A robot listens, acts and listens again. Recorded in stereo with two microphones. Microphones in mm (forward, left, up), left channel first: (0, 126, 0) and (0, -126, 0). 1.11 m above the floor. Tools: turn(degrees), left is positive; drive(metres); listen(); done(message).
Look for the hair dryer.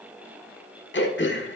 listen()
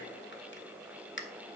listen()
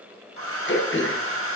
turn(degrees=-60)
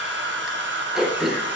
turn(degrees=-50)
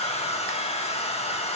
turn(degrees=25)
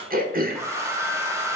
turn(degrees=-10)
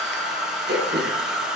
done("Found it: a hair dryer, straight ahead, 1 to 2 m away.")